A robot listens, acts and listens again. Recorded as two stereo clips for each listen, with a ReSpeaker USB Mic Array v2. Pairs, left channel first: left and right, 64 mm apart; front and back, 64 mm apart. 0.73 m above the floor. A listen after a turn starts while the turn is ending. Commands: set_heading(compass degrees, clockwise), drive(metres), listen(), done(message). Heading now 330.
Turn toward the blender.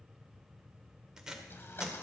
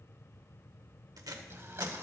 set_heading(190)
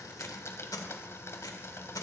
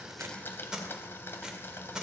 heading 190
set_heading(140)
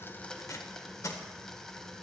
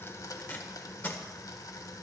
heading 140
set_heading(130)
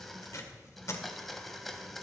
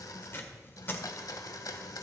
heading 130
done("Found it: a blender, straight ahead.")